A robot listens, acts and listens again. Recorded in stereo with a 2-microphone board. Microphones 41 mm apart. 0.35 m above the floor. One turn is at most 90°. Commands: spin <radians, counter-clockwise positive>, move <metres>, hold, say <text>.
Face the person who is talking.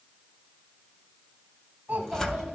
spin -0.87
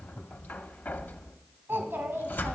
spin -1.40
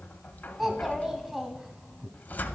spin -0.17
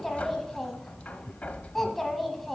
say Found it: a child speaking, straight ahead.